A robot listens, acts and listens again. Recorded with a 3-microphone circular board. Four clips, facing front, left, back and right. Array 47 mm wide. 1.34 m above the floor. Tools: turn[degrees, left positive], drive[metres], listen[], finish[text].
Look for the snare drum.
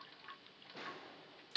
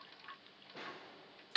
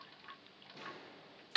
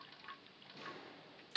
Thought: The snare drum: 60° left.
Action: turn[60]
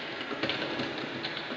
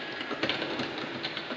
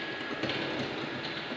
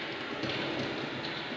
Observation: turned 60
Action: listen[]
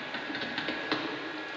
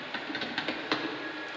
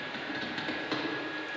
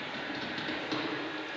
Action: listen[]
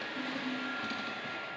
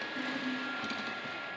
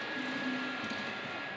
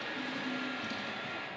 Action: finish[I heard a snare drum from this way, but can't make it out now.]